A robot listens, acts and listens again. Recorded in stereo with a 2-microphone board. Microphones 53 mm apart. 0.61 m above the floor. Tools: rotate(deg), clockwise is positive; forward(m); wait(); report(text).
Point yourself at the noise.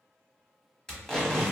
rotate(-30)
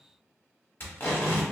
rotate(-135)
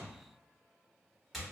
report("Facing the tape being pulled.")